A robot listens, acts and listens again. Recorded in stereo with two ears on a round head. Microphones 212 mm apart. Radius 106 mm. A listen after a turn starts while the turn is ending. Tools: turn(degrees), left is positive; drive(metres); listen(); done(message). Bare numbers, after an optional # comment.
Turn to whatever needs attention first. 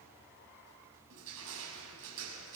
listen()
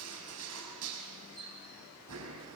listen()
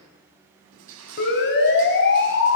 # The siren: about 45° left or 135° left.
turn(45)
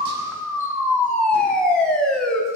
done("Facing the siren.")